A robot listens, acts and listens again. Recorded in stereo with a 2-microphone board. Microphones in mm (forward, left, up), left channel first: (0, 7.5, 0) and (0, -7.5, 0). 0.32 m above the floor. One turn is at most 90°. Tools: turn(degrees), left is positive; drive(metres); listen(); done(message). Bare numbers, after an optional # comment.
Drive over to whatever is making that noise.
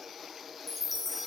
# The chime: about 20° right or 160° right.
turn(-20)
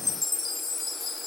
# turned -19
drive(1.0)
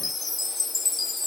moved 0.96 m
drive(1.0)
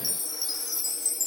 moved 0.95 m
drive(1.0)
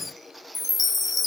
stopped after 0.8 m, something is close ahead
done("I am next to the chime.")